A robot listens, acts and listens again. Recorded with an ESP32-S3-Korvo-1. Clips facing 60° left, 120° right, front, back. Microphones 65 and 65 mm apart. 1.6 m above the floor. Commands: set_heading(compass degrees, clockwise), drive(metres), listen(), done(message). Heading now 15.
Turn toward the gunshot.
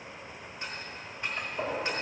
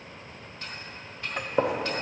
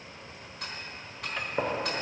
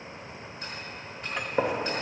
set_heading(115)
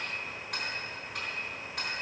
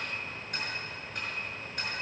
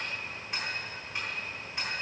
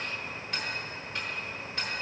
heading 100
set_heading(115)
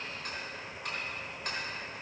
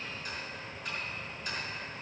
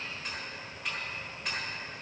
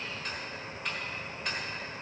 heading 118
done("Facing where the gunshot came from. I can't hear it now.")